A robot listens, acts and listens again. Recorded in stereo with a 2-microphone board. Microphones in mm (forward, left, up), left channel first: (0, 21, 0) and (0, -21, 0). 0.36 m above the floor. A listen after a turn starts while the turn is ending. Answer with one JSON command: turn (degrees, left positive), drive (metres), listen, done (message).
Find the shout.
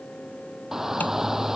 {"turn": -30}
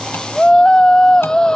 {"turn": 15}
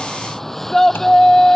{"done": "Facing the shout."}